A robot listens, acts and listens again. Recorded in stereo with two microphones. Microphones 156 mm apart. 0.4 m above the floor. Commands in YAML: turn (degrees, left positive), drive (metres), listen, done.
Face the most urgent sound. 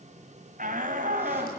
turn: -55
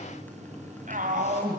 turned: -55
turn: -60
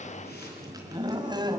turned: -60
turn: -30
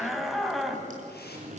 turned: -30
done: "Found it: a shout, straight ahead."